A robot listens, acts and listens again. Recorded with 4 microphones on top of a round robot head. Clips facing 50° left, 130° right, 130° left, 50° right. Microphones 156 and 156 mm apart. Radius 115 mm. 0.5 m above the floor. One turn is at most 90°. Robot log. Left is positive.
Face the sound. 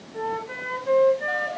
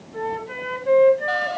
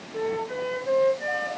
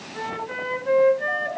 note: The flute: 75° right.
cmd yaw -75
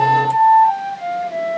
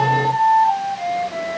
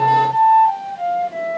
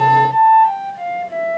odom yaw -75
note: The flute is now 10° right.
cmd yaw -10
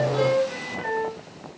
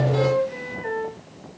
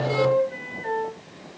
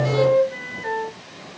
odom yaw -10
end: Facing the flute, 2 to 4 m away.